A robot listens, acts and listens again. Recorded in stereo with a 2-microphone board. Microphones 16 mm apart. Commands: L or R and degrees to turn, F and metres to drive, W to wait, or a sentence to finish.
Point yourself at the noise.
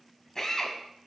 L35
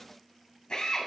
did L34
L115
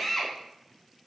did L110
Facing the drill.